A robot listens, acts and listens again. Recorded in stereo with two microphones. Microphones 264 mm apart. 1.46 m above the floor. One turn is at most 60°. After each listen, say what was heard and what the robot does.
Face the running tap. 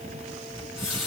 Turn 60° left.
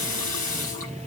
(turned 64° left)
So it is at 30° left. Turn 30° left.
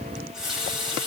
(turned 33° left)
Found it: a running tap, straight ahead, over 4 m away.